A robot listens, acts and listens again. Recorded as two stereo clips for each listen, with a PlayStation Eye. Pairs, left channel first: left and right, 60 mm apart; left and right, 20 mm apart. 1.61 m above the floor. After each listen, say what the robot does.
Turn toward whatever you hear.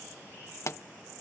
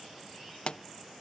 Turn 50° left.
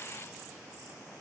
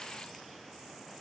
Keep listening.
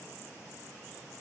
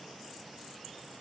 I heard a pop, but can't make it out now. It was about straight ahead or 80° left.